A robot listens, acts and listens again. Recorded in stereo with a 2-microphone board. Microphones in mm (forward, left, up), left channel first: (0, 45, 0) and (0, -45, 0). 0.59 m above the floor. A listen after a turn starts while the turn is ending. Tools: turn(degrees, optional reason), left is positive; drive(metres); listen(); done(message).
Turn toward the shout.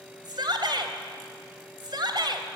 turn(degrees=-55, reason="The shout: about 55° right or 125° right.")
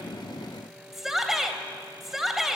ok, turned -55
done("Facing the shout.")